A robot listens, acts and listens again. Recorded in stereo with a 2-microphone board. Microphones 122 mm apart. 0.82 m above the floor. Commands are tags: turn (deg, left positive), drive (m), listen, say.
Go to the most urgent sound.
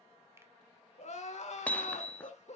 <turn deg="70"/>
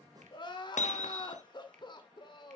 <turn deg="40"/>
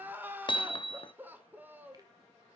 <turn deg="-15"/>
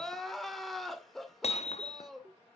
<drive m="1.0"/>
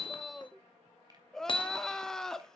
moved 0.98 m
<drive m="1.0"/>
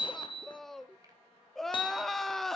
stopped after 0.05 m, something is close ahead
<say>Arrived at the crying, straight ahead.</say>